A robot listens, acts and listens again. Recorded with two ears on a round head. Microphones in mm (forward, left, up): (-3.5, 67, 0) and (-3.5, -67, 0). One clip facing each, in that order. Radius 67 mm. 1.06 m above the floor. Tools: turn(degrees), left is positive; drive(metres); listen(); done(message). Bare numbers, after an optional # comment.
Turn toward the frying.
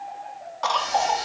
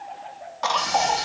# The frying: about 75° right or 105° right.
turn(-75)
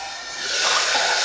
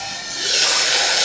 # So it is at 35° right.
turn(-35)
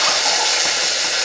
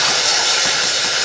# The frying is now 10° left.
turn(10)
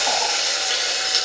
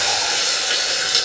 done("Facing the frying.")